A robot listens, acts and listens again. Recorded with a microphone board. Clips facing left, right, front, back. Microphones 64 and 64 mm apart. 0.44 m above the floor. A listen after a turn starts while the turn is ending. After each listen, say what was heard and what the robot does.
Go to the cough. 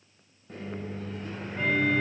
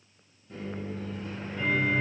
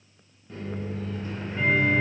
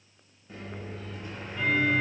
Keep listening.
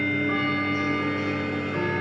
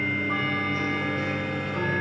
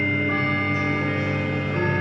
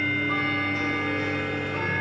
Keep listening.
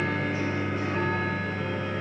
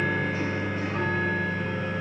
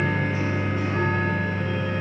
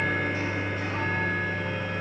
I can't make out a cough, only a microwave and ticking.